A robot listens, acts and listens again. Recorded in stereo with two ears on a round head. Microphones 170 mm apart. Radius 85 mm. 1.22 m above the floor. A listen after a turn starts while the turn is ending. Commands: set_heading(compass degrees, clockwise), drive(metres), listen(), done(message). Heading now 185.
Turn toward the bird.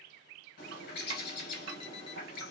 set_heading(130)
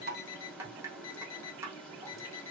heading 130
done("Found it: a bird, straight ahead.")